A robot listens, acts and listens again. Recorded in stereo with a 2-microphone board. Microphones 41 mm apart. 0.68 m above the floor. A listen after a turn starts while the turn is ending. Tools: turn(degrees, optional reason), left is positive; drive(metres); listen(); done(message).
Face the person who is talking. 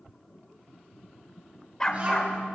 turn(degrees=-30, reason="The child speaking: about 30° right or 150° right.")
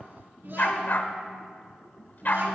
turn(degrees=-120, reason="So it is at 120° right.")
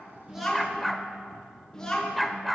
turn(degrees=15, reason="The child speaking is now 15° left.")
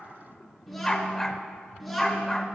done("Facing the child speaking, over 4 m away.")